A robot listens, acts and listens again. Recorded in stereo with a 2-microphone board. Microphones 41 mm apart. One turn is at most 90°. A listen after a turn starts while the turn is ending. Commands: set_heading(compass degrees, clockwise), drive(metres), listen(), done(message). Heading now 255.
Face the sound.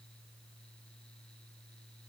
listen()
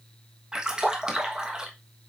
set_heading(275)
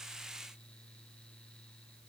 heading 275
listen()
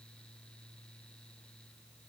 done("I heard a splash, but can't make it out now. It was about straight ahead or 140° right.")